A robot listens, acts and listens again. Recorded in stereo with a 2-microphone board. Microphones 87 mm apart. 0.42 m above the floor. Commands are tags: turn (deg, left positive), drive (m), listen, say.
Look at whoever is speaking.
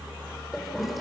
<listen/>
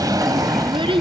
<turn deg="-90"/>
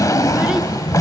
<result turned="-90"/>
<listen/>
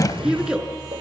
<turn deg="-10"/>
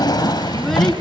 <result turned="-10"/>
<listen/>
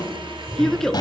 <say>Found it: a child speaking, straight ahead.</say>